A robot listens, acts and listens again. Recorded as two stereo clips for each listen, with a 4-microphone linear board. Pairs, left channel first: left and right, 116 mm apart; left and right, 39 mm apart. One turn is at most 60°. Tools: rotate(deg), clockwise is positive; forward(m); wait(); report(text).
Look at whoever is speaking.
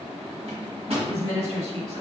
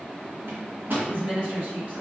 rotate(35)
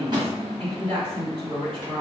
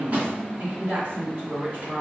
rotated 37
rotate(60)
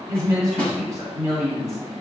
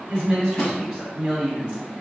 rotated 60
rotate(40)
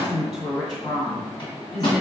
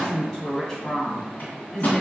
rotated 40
report("Found it: a woman speaking, straight ahead, 1 to 2 m away.")